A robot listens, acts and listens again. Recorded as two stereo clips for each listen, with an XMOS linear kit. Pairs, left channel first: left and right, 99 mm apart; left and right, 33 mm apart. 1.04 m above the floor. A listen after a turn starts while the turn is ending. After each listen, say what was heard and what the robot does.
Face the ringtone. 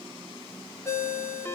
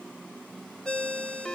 The ringtone: about 25° left or 155° left. Turn 25° left.
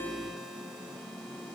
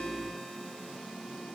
Keep listening.
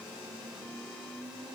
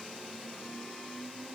Keep listening.
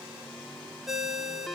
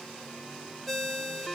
Found it: a ringtone, straight ahead.